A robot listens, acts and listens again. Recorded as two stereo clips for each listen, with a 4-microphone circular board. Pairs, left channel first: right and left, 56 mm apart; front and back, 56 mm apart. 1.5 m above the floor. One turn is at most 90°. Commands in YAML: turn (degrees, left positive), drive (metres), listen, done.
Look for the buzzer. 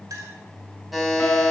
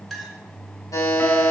done: "Found it: a buzzer, straight ahead."